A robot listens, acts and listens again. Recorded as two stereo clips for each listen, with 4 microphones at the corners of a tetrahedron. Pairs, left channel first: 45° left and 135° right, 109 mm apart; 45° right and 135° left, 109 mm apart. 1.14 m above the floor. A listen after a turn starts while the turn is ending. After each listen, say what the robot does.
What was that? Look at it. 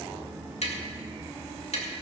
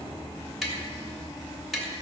Turn 45° left.
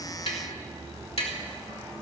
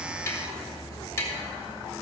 Turn 20° left.
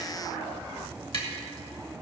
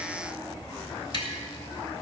Facing the tapping.